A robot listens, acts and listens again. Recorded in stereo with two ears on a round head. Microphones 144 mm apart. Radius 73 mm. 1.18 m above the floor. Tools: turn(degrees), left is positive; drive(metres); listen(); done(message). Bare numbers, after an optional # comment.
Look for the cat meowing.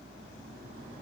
listen()
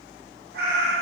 # The cat meowing: about 70° right or 110° right.
turn(-70)
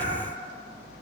# So it is at 10° right.
turn(-10)
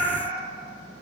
# The cat meowing is now 15° right.
turn(-15)
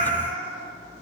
# The cat meowing is now 10° right.
turn(-10)
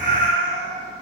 done("Found it: a cat meowing, straight ahead, 2 to 4 m away.")